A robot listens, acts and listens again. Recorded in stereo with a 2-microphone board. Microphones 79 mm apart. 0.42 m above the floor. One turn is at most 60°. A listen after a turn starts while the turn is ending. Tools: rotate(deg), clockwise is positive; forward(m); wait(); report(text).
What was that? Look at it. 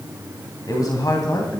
rotate(-55)
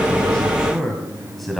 report("Found it: a man speaking, straight ahead.")